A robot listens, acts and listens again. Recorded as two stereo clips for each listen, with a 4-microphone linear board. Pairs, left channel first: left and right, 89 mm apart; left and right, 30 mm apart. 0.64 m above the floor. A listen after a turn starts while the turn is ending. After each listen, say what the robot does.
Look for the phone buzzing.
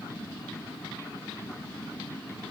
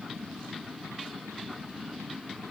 Keep listening.
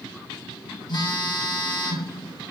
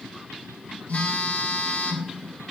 Turn 50° left.
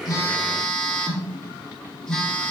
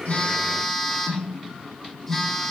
Facing the phone buzzing.